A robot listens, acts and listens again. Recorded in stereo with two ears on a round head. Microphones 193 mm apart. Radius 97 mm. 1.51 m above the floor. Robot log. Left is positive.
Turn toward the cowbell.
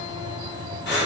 cmd idle
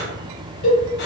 note: The cowbell: about 45° left or 135° left.
cmd yaw +45
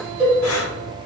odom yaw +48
end: Facing the cowbell.